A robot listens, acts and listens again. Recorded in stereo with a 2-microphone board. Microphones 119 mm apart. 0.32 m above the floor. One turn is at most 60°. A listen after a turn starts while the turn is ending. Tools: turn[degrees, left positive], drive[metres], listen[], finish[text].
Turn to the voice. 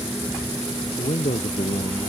Thought: The man speaking: about 75° left or 105° left.
Action: turn[60]
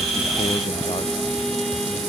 Action: listen[]
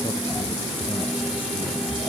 Action: listen[]
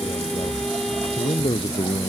Thought: So it is at 45° left.
Action: turn[45]
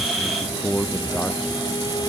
Thought: The man speaking is now 10° left.
Action: turn[10]
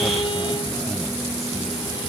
Action: listen[]
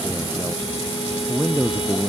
Action: finish[Found it: a man speaking, straight ahead.]